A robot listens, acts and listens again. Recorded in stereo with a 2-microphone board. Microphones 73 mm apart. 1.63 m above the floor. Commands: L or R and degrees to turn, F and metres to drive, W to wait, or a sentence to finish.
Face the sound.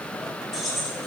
L30
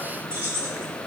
R30
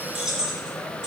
R10
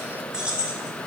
R15
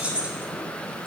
R30
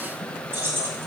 R30
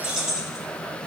Found it: keys jangling, straight ahead, 1 to 2 m away.